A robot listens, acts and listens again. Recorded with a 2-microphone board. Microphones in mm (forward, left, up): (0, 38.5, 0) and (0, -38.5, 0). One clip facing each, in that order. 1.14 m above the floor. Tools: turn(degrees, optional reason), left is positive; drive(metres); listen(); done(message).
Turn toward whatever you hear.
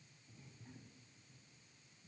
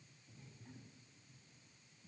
listen()
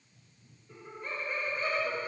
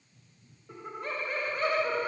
turn(degrees=-90)
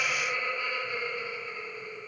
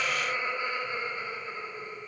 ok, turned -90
turn(degrees=-35, reason="So it is at 35° right.")
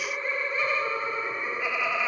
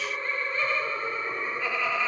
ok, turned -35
turn(degrees=10, reason="The laughter is now 10° left.")
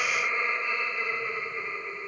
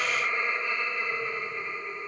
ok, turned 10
done("Facing the laughter, 2 to 4 m away.")